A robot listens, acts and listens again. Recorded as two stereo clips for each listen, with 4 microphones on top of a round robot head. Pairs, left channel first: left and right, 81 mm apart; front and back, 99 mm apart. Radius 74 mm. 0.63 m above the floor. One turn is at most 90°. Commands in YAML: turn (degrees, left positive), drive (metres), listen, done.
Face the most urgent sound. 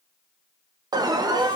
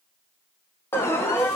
turn: -60
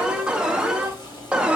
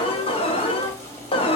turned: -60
turn: -10
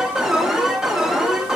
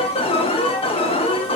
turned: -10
done: "Found it: an alarm, straight ahead."